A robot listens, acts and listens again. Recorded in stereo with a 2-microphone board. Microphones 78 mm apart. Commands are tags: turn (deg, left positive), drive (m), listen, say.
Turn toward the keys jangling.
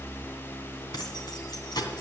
<turn deg="70"/>
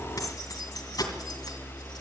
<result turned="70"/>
<turn deg="60"/>
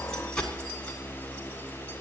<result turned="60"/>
<turn deg="15"/>
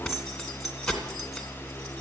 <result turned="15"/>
<say>Facing the keys jangling.</say>